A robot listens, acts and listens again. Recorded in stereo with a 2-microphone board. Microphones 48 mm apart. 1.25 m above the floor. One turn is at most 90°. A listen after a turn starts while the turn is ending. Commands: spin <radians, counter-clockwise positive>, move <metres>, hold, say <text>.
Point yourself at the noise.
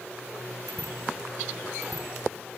spin 1.57
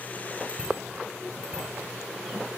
spin -0.26
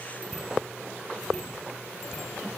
say Facing the bicycle bell, over 4 m away.